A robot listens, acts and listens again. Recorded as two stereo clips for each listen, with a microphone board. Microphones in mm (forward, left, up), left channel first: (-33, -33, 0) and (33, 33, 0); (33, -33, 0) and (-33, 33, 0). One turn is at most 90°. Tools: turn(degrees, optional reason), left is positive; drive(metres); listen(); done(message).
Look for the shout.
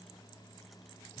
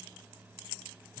listen()
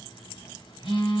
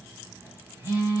listen()
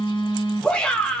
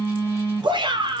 turn(degrees=90, reason="The shout: 145° left.")
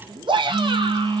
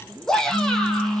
turn(degrees=35, reason="The shout is now 35° left.")
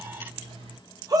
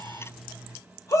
done("Found it: a shout, straight ahead.")